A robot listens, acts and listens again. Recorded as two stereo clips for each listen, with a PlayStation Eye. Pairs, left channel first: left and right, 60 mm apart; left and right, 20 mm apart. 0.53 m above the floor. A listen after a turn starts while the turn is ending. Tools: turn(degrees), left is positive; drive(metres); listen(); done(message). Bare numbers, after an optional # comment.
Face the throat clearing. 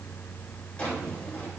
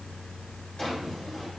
listen()
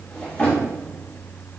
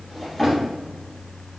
listen()
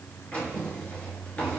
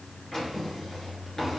done("I can't make out throat clearing to turn to.")